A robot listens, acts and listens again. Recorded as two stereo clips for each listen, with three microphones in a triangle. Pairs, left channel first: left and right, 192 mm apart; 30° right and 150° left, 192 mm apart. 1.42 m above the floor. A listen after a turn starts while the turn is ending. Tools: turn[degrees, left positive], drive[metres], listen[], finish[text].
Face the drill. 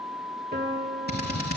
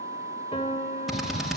Thought: The drill: 60° left.
Action: turn[60]
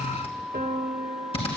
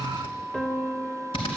Thought: The drill is now 30° left.
Action: turn[30]
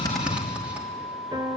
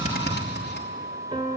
Action: finish[Found it: a drill, straight ahead.]